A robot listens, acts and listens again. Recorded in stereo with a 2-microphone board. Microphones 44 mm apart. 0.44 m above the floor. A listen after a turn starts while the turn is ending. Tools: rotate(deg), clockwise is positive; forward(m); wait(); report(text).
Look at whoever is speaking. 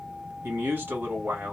rotate(65)
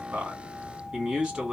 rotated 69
rotate(20)
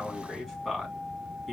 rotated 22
report("Found it: a man speaking, straight ahead, 2 to 4 m away.")